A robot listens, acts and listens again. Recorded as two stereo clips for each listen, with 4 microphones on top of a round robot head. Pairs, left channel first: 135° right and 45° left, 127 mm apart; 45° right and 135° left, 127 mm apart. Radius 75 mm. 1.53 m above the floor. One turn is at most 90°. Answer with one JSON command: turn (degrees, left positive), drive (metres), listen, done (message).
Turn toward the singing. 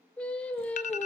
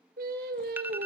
{"turn": 90}
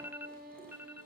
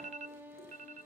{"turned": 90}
{"turn": 60}
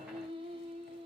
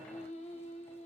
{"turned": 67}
{"done": "Found it: singing, straight ahead, over 4 m away."}